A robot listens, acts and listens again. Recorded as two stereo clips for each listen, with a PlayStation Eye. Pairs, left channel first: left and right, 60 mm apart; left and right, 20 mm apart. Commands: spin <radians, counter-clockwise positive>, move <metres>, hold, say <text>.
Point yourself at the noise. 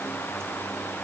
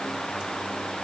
hold
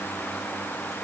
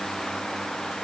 hold
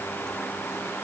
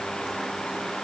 say I can't make out anything.